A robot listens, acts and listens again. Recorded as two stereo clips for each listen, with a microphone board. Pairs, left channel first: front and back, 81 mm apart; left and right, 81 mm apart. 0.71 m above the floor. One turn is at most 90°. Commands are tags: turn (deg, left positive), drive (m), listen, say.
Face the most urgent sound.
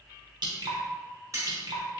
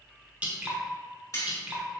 <listen/>
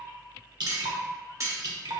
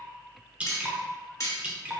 <listen/>
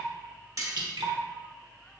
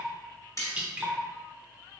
<say>I can't make out anything urgent, only dripping and cutlery clinking.</say>